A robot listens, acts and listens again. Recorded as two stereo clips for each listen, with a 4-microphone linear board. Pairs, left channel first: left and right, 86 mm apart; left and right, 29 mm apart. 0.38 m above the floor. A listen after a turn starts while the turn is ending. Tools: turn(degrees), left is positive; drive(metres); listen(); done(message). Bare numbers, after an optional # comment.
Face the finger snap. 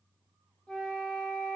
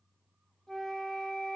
listen()
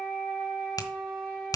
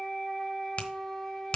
# The finger snap: about 50° left or 130° left.
turn(50)
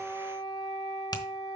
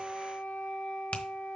# So it is at 75° left.
turn(75)
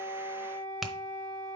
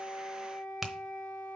done("Found it: a finger snap, straight ahead, 1 to 2 m away.")